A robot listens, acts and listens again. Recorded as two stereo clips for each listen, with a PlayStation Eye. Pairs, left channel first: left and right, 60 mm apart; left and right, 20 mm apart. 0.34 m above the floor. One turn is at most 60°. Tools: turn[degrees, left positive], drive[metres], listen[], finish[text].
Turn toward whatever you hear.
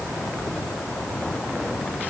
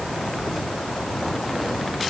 Action: listen[]
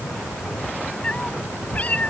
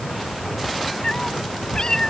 Thought: The cat meowing: about 25° left or 155° left.
Action: turn[25]
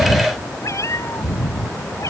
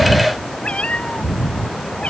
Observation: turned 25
Thought: So it is at 115° left.
Action: turn[60]
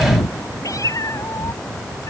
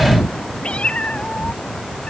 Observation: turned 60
Thought: The cat meowing is now 70° left.
Action: turn[60]
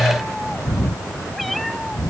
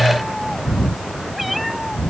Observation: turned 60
Action: finish[Facing the cat meowing.]